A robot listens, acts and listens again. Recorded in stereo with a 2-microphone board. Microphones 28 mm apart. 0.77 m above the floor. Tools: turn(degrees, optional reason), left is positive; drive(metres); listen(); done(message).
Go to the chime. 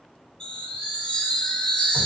turn(degrees=40, reason="The chime: about 40° left or 140° left.")
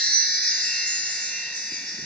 turn(degrees=100, reason="So it is at 100° left.")
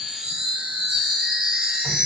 turn(degrees=-30, reason="The chime is now 30° right.")
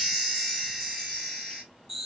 turn(degrees=-10, reason="The chime is now 10° right.")
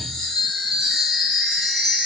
drive(metres=1.0)
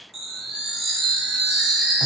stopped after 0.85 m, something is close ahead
done("Arrived at the chime, straight ahead.")